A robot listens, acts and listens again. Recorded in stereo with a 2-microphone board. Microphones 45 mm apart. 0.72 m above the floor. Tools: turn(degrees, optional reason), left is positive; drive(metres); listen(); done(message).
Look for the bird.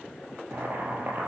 listen()
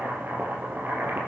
listen()
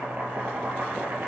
done("I can't make out a bird, only boiling.")